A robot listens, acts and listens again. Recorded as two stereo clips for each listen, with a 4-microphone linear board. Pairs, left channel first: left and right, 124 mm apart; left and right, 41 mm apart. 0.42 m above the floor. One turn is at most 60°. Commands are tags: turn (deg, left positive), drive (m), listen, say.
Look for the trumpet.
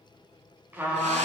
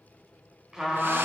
<turn deg="-15"/>
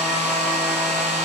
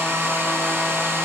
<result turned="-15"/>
<listen/>
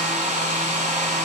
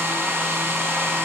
<listen/>
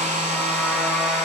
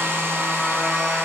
<say>I heard a trumpet, but can't make it out now. It was about straight ahead or 150° right.</say>